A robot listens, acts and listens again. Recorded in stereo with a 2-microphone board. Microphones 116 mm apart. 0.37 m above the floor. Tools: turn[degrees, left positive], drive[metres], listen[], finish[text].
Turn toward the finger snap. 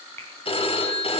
Thought: The finger snap: about 20° left or 160° left.
Action: turn[20]
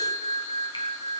Action: listen[]
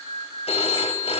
Action: listen[]
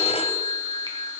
Action: finish[I heard a finger snap, but can't make it out now. It was about straight ahead or 140° left.]